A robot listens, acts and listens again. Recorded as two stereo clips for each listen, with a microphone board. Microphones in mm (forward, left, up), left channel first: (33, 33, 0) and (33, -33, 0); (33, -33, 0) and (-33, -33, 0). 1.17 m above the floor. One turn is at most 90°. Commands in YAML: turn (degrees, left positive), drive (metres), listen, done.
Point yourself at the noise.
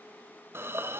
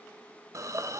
turn: -90
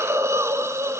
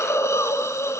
turn: -45
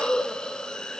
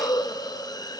turn: 10
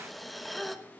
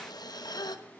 done: "Found it: a hiss, straight ahead."